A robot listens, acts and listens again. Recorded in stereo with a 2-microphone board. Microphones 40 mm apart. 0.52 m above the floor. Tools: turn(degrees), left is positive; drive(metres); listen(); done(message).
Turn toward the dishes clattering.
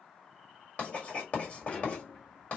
turn(degrees=30)
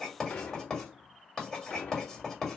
turn(degrees=120)
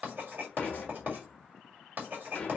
turn(degrees=35)
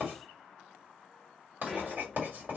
turn(degrees=-15)
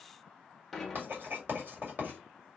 done("Found it: dishes clattering, straight ahead, 1 to 2 m away.")